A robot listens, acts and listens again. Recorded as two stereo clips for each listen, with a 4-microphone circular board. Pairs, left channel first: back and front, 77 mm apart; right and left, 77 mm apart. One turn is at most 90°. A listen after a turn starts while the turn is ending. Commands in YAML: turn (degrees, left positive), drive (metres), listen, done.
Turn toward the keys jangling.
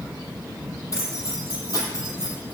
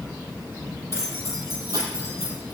turn: 90
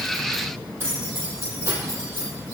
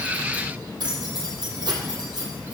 turn: 60
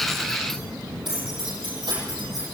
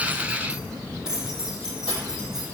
turn: 10
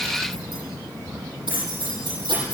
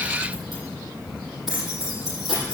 done: "Found it: keys jangling, straight ahead."